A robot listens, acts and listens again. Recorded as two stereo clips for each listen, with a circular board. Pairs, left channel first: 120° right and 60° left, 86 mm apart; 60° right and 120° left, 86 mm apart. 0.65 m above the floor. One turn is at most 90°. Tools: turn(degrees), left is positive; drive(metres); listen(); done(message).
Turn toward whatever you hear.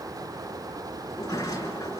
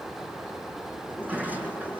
turn(degrees=-90)
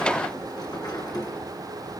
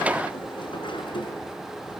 turn(degrees=-80)
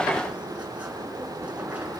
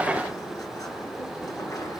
listen()
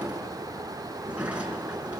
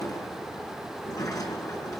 turn(degrees=-15)
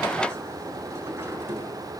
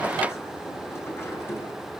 listen()
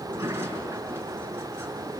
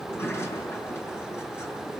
done("Facing the sliding door.")